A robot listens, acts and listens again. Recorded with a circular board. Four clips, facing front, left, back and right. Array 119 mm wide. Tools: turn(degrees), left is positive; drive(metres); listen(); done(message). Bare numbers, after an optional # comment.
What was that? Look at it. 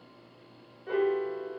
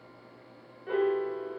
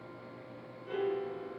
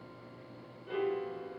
# The piano: 50° left.
turn(50)
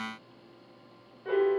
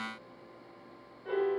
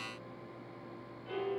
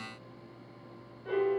done("Found it: a piano, straight ahead.")